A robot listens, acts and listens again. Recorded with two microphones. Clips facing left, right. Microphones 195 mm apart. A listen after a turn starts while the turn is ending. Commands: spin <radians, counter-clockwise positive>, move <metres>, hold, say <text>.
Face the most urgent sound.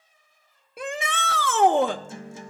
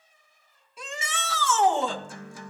spin 1.05
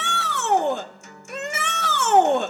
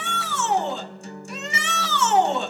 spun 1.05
spin 0.96
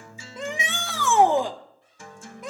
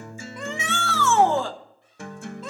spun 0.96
spin 0.26
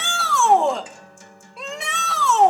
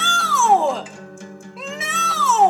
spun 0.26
say Found it: a shout, straight ahead.